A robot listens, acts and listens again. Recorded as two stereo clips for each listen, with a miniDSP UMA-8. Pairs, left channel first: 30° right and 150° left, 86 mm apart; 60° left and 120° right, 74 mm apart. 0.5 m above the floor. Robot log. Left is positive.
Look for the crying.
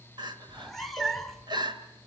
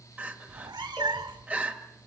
note: The crying: 175° left.
cmd yaw +175
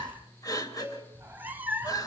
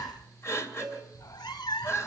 note: The crying is now 10° left.
cmd yaw +10
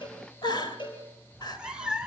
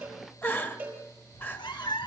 end: Facing the crying, 2 to 4 m away.